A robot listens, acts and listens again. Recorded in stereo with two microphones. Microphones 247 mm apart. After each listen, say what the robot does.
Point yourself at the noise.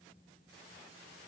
Keep listening.
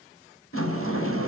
Turn 60° left.
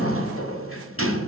Turn 60° left.
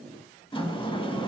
Turn 20° left.
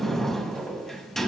Found it: a sliding door, straight ahead, under 1 m away.